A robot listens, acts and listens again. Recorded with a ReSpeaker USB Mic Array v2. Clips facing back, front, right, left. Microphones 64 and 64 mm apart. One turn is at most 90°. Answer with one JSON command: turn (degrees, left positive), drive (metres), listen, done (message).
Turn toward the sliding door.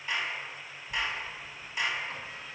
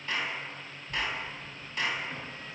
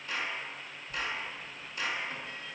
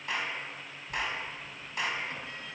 {"turn": 90}
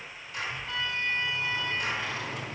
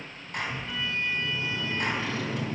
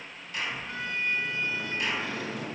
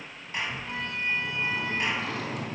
{"turn": 90}
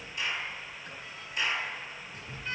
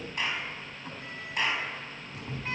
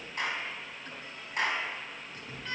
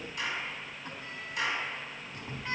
{"turn": 25}
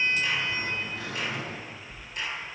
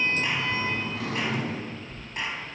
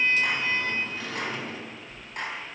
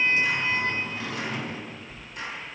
{"turn": 15}
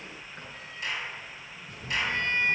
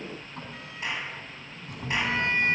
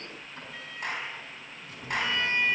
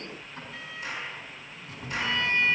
{"done": "Found it: a sliding door, straight ahead."}